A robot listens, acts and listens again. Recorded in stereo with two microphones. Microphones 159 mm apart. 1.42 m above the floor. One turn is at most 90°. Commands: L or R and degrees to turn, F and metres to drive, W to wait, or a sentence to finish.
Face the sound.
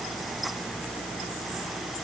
W
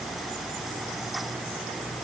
W
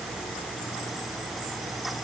I can't make out anything to turn to.